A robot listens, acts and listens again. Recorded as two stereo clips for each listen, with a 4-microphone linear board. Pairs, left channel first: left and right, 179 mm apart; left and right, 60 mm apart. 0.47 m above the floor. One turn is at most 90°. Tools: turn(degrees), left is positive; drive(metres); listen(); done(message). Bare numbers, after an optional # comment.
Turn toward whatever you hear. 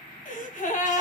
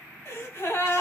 # The gasp: about 45° left or 135° left.
turn(45)
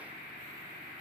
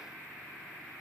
listen()
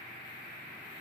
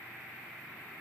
done("I heard a gasp, but can't make it out now. It was about straight ahead or 90° left.")